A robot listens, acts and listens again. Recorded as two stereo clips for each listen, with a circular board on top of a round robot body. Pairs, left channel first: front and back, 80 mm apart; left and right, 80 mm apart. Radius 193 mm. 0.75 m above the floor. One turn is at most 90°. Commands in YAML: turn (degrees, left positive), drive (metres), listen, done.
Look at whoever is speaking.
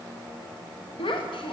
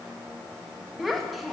done: "Facing the child speaking, under 1 m away."